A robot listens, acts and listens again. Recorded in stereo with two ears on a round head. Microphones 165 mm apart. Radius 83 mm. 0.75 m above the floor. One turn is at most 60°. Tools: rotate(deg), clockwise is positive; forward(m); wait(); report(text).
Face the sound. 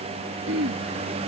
rotate(60)
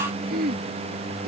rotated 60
rotate(50)
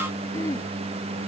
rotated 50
wait()
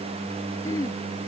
rotate(-15)
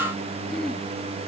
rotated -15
wait()
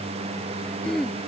report("Facing the throat clearing.")